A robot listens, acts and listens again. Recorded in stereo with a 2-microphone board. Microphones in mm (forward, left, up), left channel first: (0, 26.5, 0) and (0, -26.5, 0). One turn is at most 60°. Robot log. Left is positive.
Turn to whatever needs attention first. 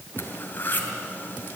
cmd idle
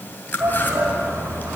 note: The shout: about 55° right or 125° right.
cmd yaw -55
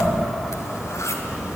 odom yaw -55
cmd idle
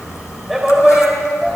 end: Facing the shout.